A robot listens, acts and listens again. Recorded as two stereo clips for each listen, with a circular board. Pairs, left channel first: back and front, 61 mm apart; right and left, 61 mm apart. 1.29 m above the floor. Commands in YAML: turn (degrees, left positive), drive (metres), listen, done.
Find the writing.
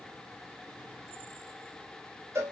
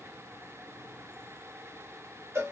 listen: true
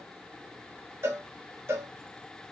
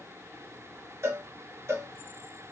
listen: true
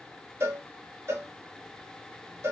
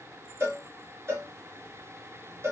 done: "I can't make out writing to turn to."